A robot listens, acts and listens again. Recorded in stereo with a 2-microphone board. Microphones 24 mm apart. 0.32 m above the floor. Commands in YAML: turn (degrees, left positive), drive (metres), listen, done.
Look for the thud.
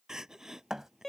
turn: -15
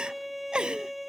listen: true
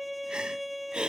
done: "I heard a thud, but can't make it out now. It was about straight ahead or 150° right."